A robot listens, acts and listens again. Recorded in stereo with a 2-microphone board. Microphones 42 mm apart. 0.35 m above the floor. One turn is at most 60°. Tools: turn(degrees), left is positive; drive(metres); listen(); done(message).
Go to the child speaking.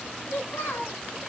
turn(degrees=60)
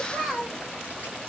turn(degrees=10)
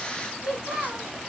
drive(metres=1.0)
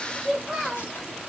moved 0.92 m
drive(metres=1.0)
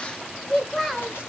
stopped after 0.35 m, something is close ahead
turn(degrees=10)
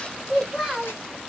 done("Arrived at the child speaking, straight ahead.")